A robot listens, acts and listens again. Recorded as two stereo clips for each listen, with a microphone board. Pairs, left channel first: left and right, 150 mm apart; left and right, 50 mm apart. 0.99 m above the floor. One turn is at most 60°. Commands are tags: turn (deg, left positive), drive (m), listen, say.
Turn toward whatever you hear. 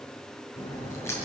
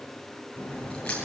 <turn deg="20"/>
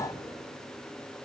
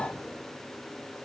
<listen/>
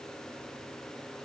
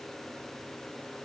<say>I heard a crack, but can't make it out now. It was about straight ahead or 140° left.</say>